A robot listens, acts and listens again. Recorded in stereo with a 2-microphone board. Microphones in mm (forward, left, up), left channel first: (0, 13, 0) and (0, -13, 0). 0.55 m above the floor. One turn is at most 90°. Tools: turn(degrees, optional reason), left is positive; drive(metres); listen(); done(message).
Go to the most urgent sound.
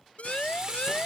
turn(degrees=55, reason="The siren: about 55° left or 125° left.")
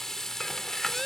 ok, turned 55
listen()
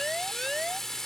drive(metres=1.0)
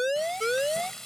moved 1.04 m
drive(metres=1.0)
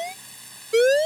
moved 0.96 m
drive(metres=1.0)
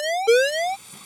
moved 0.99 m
drive(metres=1.0)
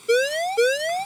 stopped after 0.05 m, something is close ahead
done("Arrived at the siren, straight ahead.")